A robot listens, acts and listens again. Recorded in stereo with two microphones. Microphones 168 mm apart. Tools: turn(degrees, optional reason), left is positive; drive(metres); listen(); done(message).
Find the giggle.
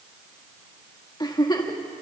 turn(degrees=25, reason="The giggle: about 25° left or 155° left.")
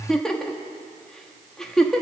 done("Found it: a giggle, straight ahead, 1 to 2 m away.")